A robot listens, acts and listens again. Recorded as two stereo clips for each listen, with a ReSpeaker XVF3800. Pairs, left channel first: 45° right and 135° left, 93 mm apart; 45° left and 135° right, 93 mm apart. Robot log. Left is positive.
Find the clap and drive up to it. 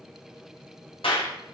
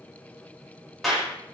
note: The clap: 45° right.
cmd yaw -45
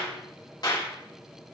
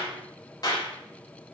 cmd fwd 1.0
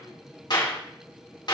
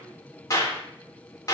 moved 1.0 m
cmd fwd 1.0
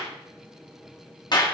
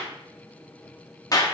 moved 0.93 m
cmd fwd 1.0
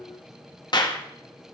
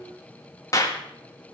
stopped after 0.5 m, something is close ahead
note: The clap is now 10° right.
cmd yaw -10
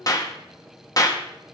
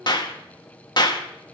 end: I am next to the clap.